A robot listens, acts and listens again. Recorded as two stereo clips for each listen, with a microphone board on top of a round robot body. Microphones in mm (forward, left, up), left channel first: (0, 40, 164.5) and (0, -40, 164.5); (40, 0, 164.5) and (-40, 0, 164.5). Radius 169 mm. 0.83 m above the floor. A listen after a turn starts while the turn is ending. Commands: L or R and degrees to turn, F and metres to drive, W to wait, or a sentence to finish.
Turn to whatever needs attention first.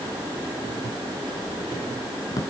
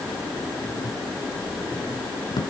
W
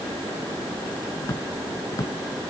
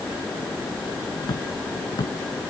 W
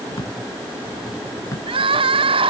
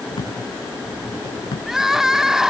R95
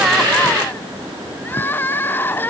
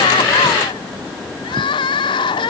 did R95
L25
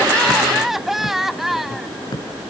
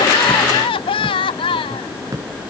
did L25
Found it: crying, straight ahead.